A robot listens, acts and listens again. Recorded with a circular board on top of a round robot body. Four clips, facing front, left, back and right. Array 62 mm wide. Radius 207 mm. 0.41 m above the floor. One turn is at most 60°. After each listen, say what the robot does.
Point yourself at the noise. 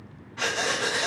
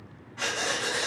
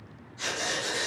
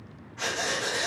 Turn 10° left.
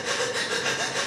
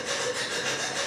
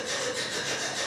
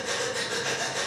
Facing the breathing, 1 to 2 m away.